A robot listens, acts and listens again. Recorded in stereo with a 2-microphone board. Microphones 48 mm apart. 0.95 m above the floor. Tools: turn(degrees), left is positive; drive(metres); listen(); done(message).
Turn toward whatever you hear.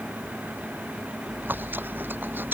turn(degrees=-45)
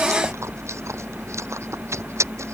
turn(degrees=-90)
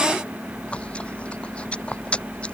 turn(degrees=25)
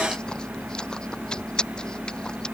turn(degrees=15)
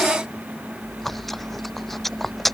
done("Found it: chewing, straight ahead.")